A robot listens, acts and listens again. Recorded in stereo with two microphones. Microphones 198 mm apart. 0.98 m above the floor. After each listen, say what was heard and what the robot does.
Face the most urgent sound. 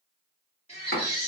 The baby crying: about 30° left or 150° left. Turn 30° left.
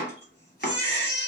So it is at 120° left. Turn 120° left.
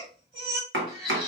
The baby crying is now 25° right. Turn 25° right.
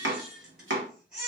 Found it: a baby crying, straight ahead.